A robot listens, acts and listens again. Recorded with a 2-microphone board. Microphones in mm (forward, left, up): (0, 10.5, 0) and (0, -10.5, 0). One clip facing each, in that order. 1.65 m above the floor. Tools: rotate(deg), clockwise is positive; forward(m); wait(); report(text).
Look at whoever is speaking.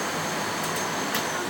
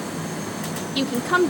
rotate(70)
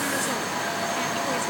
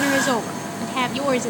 rotate(35)
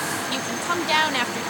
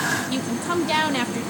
rotate(-10)
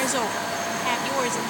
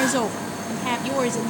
report("Found it: a woman speaking, straight ahead.")